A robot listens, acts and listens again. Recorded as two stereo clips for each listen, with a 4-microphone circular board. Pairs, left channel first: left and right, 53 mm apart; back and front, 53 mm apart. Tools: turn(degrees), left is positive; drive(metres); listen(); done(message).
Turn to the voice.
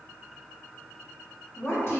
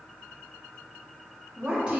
turn(degrees=70)
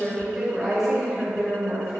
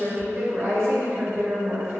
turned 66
done("Facing the woman speaking.")